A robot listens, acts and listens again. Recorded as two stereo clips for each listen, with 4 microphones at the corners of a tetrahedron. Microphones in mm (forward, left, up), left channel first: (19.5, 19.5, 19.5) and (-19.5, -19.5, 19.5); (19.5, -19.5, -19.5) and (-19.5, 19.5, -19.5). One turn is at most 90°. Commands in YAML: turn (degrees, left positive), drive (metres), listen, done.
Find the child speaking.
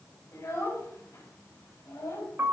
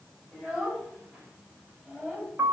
turn: 60
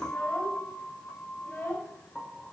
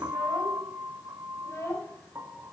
done: "Found it: a child speaking, straight ahead, over 4 m away."